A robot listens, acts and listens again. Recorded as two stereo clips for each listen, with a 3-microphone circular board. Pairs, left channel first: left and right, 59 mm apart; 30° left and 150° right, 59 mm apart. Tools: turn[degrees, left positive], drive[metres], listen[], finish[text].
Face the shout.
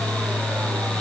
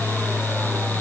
Action: listen[]
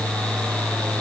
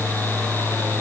Action: listen[]
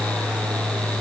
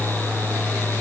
Action: finish[I can't make out a shout.]